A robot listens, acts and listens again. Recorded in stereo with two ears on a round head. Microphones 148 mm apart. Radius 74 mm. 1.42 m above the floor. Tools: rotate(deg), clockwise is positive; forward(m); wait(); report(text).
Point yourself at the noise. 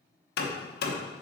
rotate(-65)
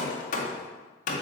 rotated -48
rotate(-50)
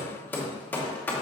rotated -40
rotate(-10)
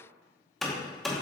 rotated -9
report("Found it: hammering, straight ahead.")